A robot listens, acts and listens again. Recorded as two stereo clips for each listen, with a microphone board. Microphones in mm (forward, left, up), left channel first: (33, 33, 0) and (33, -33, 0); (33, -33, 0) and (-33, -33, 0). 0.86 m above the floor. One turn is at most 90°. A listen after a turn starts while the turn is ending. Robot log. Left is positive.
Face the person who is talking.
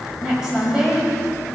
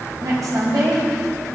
note: The woman speaking: 170° right.
cmd yaw -90
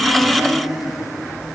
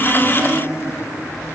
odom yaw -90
note: Nothing new. It was at 80° right.
cmd yaw -80
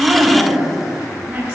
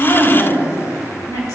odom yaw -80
note: The woman speaking is now 20° right.
cmd yaw -20
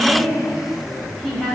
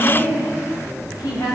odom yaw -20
end: Found it: a woman speaking, straight ahead.